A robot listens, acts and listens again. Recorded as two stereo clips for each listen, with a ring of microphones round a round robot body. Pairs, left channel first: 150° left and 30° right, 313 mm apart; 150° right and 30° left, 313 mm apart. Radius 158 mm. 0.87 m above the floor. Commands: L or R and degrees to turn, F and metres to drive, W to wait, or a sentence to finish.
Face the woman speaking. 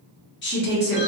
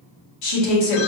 R150
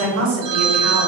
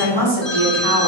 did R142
L10
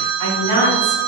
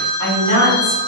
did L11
L10
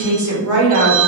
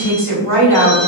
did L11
Found it: a woman speaking, straight ahead.